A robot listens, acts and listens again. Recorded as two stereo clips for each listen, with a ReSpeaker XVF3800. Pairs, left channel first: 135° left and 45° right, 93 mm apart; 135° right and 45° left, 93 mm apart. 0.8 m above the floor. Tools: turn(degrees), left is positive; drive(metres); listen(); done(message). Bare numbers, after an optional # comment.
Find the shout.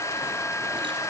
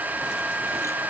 listen()
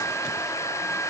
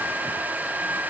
listen()
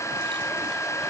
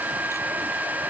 done("I can't make out a shout to turn to.")